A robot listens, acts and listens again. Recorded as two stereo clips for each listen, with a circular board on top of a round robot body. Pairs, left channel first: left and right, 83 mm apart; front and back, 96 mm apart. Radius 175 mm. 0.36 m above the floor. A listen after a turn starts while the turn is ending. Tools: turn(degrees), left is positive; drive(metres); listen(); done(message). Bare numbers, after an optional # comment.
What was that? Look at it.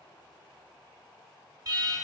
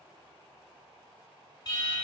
# The alarm: 50° right.
turn(-50)
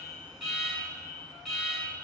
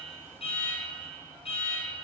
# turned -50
done("Found it: an alarm, straight ahead.")